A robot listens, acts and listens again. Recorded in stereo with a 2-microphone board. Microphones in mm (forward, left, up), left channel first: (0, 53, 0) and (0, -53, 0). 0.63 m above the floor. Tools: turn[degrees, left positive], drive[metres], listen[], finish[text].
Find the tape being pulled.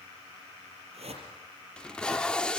Action: turn[30]
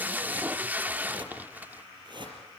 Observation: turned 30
Thought: So it is at 15° right.
Action: turn[-15]
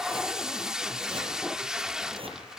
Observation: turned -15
Action: finish[Found it: tape being pulled, straight ahead, under 1 m away.]